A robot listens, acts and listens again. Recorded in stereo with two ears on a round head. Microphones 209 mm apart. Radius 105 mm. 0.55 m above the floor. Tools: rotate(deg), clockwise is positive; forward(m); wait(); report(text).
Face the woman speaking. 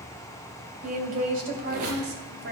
rotate(50)
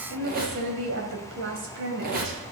rotate(50)
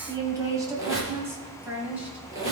report("Facing the woman speaking, 2 to 4 m away.")